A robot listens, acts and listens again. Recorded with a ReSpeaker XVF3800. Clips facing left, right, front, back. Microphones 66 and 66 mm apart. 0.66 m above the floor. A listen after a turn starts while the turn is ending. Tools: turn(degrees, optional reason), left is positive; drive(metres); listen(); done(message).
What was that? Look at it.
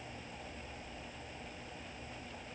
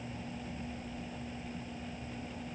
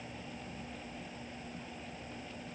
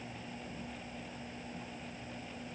listen()
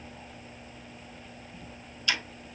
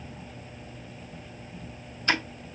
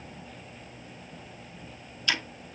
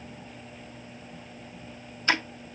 turn(degrees=-135, reason="The ticking: 135° right.")
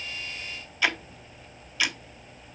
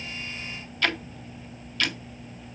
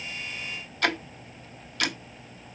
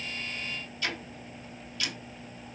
turn(degrees=10, reason="The ticking is now 10° left.")
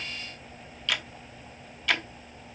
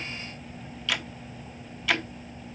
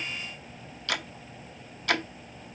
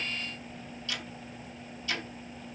done("Facing the ticking.")